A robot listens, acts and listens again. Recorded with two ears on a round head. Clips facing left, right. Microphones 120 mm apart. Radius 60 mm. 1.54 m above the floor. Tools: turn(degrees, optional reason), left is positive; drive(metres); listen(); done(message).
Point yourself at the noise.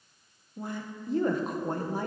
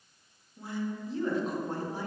turn(degrees=45, reason="The woman speaking: about 45° left or 135° left.")
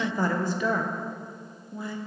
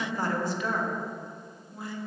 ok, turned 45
turn(degrees=90, reason="So it is at 90° left.")
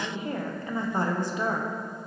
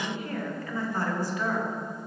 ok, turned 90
turn(degrees=20, reason="The woman speaking is now 20° left.")
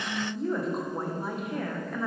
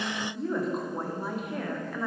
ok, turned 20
done("Found it: a woman speaking, straight ahead, 1 to 2 m away.")